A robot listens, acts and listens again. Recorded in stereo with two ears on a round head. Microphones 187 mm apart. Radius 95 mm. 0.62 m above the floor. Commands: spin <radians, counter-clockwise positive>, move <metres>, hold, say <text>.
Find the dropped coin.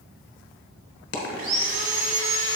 spin 0.79
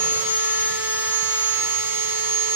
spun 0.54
hold
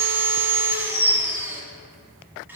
say I heard a dropped coin, but can't make it out now. It was about 15° left or 105° left.